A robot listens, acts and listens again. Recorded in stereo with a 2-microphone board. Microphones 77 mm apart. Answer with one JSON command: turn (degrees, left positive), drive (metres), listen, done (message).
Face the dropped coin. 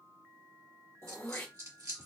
{"turn": -50}
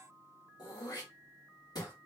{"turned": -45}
{"listen": true}
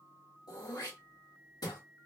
{"done": "I heard a dropped coin, but can't make it out now. It was about 5° right or 85° right."}